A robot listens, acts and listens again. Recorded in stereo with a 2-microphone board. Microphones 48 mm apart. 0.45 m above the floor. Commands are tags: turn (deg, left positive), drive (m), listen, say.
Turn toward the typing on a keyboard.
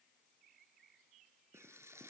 <listen/>
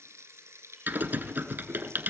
<turn deg="-45"/>
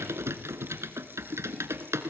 <turn deg="-95"/>
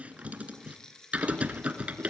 <turn deg="-30"/>
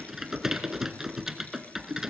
<turn deg="-10"/>
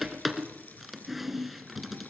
<say>Found it: typing on a keyboard, straight ahead, 1 to 2 m away.</say>